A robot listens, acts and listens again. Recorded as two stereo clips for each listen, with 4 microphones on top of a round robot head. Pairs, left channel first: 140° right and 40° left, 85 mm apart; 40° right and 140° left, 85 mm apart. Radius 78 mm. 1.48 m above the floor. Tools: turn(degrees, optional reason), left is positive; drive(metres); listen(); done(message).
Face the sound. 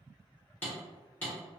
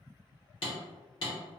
turn(degrees=-65, reason="The hammering: 65° right.")
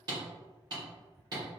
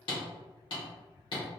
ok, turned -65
done("Facing the hammering, 1 to 2 m away.")